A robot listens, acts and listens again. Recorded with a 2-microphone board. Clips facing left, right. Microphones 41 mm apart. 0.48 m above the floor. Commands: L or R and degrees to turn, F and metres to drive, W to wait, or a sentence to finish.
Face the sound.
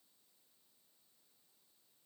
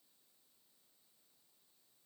W
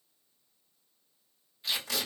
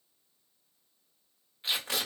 R35
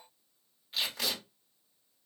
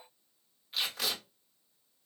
Found it: tape being pulled, straight ahead, 1 to 2 m away.